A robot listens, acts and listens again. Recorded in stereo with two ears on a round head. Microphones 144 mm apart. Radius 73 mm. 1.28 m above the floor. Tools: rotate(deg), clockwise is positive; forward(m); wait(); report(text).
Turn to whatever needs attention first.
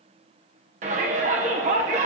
rotate(45)
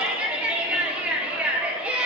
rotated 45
rotate(10)
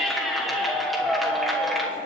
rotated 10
report("Found it: a shout, straight ahead, 1 to 2 m away.")